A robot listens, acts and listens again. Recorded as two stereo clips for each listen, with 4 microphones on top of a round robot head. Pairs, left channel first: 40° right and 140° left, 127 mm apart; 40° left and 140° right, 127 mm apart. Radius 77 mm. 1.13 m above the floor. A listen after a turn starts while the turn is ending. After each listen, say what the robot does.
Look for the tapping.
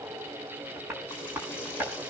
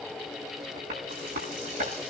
Turn 145° right.
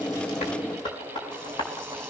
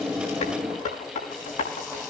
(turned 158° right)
Turn 10° left.
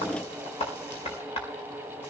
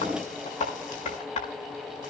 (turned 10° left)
Found it: tapping, straight ahead.